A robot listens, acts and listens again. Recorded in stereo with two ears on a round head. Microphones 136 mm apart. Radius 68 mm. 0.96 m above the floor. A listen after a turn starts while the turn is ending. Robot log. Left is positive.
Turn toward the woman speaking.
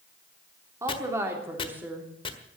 cmd yaw -30
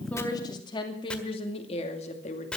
note: So it is at 50° left.
cmd yaw +50
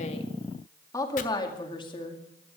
note: The woman speaking is now 35° left.
cmd yaw +35
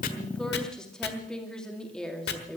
end: Found it: a woman speaking, straight ahead.